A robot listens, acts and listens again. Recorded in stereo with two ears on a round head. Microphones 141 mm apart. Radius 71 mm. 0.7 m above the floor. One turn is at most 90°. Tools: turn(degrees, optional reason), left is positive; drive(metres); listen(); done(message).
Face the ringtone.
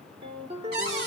turn(degrees=-35, reason="The ringtone: about 35° right or 145° right.")
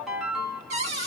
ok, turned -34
done("Facing the ringtone.")